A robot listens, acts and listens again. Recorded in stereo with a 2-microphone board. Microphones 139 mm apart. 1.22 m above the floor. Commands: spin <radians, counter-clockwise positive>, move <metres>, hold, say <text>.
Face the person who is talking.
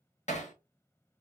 hold
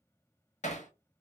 hold
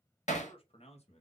spin 0.87
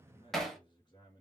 spin 0.52
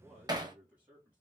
spin -0.17
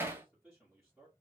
say Facing the man speaking, 2 to 4 m away.